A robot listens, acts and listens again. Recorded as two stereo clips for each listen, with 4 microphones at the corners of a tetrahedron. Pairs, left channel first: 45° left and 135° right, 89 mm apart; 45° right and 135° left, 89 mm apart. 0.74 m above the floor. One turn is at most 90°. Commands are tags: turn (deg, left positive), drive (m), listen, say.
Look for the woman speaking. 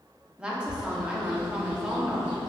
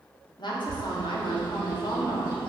<turn deg="-55"/>
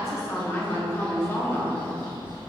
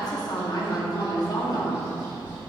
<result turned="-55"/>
<turn deg="-15"/>
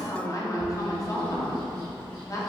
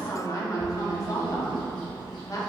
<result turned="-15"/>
<say>Facing the woman speaking.</say>